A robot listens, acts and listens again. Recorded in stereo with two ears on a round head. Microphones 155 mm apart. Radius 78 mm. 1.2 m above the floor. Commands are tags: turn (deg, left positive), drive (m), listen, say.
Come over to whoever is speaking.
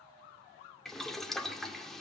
<listen/>
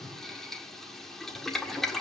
<listen/>
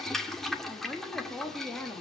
<turn deg="30"/>
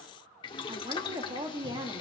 <turn deg="-25"/>
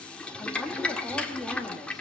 <drive m="1.0"/>
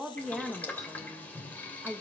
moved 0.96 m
<drive m="1.0"/>
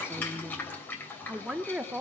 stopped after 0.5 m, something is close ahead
<say>Arrived at the woman speaking, straight ahead.</say>